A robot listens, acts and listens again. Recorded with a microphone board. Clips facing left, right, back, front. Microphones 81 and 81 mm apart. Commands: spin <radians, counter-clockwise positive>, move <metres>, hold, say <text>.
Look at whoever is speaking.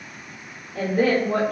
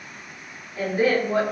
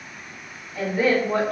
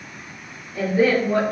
spin 1.31
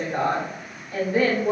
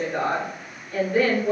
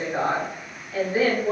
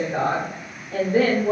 say Found it: a woman speaking, straight ahead.